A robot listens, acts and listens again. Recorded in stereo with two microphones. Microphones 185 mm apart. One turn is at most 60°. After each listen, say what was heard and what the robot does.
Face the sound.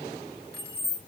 The keys jangling: about 60° left or 120° left. Turn 60° left.
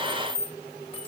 So it is at 35° left. Turn 35° left.
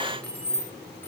The keys jangling is now 10° left. Turn 10° left.
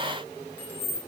The keys jangling is now 15° left. Turn 15° left.
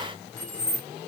The keys jangling is now 15° left. Turn 15° left.
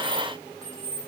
Found it: keys jangling, straight ahead, 2 to 4 m away.